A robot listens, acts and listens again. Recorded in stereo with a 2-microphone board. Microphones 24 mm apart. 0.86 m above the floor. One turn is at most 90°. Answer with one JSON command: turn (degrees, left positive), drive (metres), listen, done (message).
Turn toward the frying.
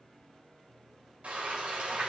{"turn": -70}
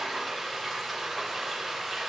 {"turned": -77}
{"done": "Facing the frying, 2 to 4 m away."}